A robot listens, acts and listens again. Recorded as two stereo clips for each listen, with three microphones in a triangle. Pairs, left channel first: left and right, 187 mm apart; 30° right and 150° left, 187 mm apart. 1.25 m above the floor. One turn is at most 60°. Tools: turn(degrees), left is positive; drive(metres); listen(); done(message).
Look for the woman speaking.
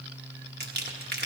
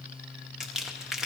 listen()
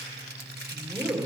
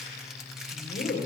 done("Found it: a woman speaking, straight ahead, 2 to 4 m away.")